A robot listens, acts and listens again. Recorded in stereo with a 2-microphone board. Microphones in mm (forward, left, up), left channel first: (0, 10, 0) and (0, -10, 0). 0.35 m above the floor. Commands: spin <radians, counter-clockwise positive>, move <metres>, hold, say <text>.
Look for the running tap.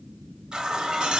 spin -0.79
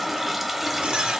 spin -0.17
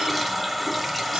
say Facing the running tap, under 1 m away.